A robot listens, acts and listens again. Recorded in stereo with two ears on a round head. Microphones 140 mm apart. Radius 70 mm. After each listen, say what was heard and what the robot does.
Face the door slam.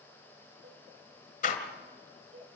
The door slam: about 50° left or 130° left. Turn 50° left.
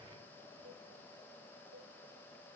Keep listening.
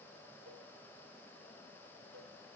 I heard a door slam, but can't make it out now. It was about straight ahead or 80° left.